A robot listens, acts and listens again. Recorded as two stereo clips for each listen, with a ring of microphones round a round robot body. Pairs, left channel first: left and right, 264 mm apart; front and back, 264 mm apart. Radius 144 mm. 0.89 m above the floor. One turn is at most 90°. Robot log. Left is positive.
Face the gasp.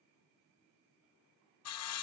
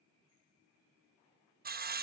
cmd idle
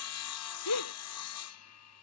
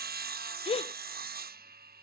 note: The gasp: 70° left.
cmd yaw +70
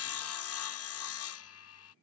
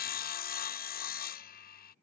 end: I heard a gasp from this way, but can't make it out now.